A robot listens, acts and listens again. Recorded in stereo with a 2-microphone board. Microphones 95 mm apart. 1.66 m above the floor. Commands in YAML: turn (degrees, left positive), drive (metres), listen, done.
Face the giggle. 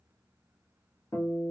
listen: true
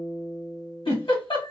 turn: 65
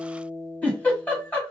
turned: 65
turn: 20
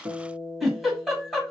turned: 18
done: "Found it: a giggle, straight ahead, 1 to 2 m away."